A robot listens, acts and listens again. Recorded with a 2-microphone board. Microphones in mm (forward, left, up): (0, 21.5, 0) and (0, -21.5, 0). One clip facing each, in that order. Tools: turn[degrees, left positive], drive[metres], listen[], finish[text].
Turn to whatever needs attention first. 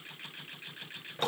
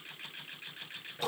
Action: listen[]
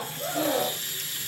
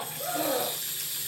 Action: turn[-30]
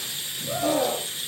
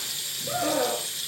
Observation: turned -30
Thought: So it is at 145° right.
Action: turn[-145]
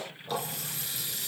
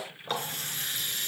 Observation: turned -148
Action: listen[]
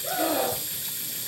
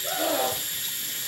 Action: finish[Facing the scream, over 4 m away.]